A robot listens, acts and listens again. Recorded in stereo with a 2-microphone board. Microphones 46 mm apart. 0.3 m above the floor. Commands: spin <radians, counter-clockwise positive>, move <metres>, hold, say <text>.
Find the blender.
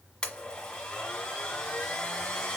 spin 0.35
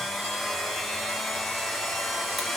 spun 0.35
say Facing the blender, 1 to 2 m away.